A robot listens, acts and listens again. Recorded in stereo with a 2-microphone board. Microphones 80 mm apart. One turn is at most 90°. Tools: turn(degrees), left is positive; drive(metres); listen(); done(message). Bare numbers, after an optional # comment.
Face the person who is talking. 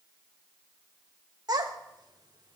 # The child speaking: about 55° right or 125° right.
turn(-55)
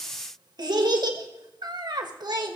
# So it is at 65° right.
turn(-65)
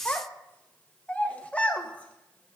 # The child speaking is now 20° left.
turn(20)
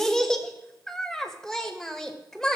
done("Facing the child speaking.")